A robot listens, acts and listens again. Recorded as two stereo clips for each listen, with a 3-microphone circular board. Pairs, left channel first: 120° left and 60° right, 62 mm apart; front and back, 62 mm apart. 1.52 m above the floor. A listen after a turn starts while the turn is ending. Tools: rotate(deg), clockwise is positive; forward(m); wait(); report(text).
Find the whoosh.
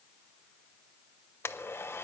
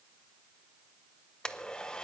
wait()
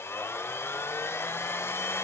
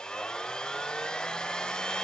wait()
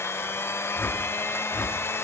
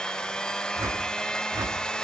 rotate(-165)
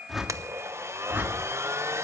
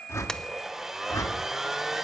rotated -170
report("Found it: a whoosh, straight ahead, 1 to 2 m away.")